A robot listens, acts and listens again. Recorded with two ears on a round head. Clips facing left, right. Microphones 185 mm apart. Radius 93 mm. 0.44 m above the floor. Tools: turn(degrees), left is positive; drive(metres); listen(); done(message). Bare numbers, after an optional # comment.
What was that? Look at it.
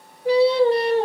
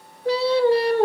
# The singing: about 25° left or 155° left.
turn(25)
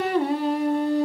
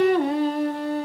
# The singing: about 15° left or 165° left.
turn(15)
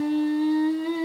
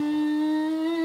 # The singing: about 15° left or 165° left.
turn(15)
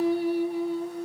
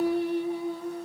turn(30)
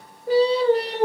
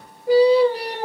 # So it is at 10° right.
turn(-10)
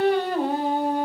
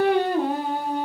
done("Found it: singing, straight ahead.")